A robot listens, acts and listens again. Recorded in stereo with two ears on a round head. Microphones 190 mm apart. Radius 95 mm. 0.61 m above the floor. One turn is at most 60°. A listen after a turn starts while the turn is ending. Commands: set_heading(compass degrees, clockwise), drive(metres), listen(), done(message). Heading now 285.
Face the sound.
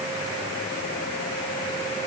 listen()
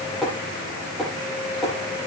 set_heading(255)
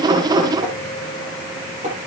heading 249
set_heading(284)
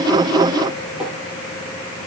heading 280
listen()
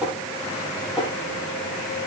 done("Found it: tapping, straight ahead.")